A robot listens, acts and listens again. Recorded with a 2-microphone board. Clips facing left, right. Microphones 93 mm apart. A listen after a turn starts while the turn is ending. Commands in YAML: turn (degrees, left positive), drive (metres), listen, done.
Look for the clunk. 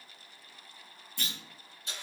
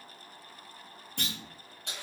turn: -65
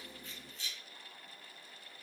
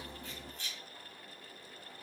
listen: true
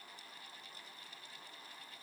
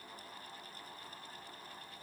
done: "I heard a clunk, but can't make it out now. It was about straight ahead or 50° right."